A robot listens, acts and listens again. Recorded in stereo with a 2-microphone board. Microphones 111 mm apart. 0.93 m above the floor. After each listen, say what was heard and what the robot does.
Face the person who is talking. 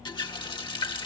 Keep listening.
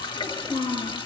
The child speaking: about 55° left or 125° left. Turn 55° left.
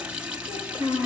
So it is at 70° left. Turn 70° left.
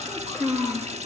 Found it: a child speaking, straight ahead, over 4 m away.